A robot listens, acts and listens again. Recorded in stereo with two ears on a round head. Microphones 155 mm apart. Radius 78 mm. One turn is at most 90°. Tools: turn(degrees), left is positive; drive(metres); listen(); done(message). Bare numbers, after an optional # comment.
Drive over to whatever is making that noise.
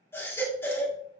turn(30)
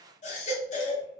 # So it is at 135° left.
turn(90)
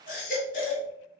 # The baby crying is now 50° left.
turn(50)
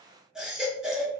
drive(1.0)
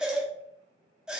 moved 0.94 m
drive(1.0)
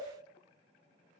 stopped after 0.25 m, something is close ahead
listen()
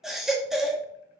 done("Arrived at the baby crying, straight ahead.")